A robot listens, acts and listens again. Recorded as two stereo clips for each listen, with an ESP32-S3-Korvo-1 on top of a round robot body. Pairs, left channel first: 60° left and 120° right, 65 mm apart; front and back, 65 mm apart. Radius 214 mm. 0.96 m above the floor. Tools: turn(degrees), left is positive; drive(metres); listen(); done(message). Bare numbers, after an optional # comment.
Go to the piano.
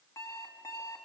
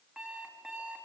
listen()
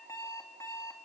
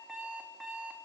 listen()
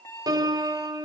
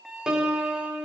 # The piano: 100° right.
turn(-100)
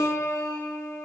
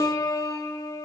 # The piano is now 15° left.
turn(15)
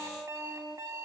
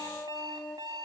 drive(1.0)
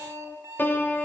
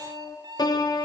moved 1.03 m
drive(1.0)
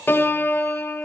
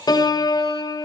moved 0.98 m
drive(1.0)
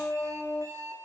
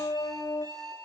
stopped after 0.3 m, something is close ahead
done("Arrived at the piano, straight ahead.")